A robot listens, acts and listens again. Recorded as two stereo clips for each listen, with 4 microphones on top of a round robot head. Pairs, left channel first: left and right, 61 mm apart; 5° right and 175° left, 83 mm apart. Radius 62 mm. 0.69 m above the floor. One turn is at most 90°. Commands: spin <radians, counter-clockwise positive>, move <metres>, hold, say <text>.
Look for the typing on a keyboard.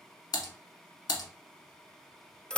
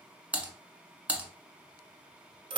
spin 1.57
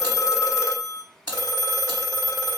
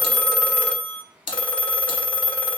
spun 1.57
spin 0.17
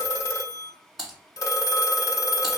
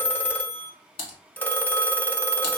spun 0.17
say Found it: typing on a keyboard, straight ahead.